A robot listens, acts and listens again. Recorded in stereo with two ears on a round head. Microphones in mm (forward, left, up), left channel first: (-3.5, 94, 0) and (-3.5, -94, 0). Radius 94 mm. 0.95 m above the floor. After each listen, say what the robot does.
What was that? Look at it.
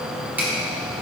Turn 30° right.
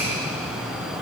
Keep listening.
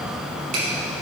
Keep listening.
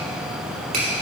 Turn 140° right.
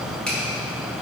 Facing the finger snap.